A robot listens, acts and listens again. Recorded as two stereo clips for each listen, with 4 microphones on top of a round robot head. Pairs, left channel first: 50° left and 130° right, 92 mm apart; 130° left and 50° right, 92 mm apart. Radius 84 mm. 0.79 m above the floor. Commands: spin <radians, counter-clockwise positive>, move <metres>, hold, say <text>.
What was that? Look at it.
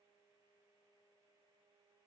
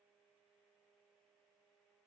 hold
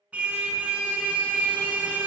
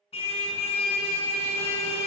spin 2.71
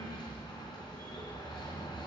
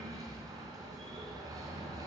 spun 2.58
say Facing the car horn, 2 to 4 m away.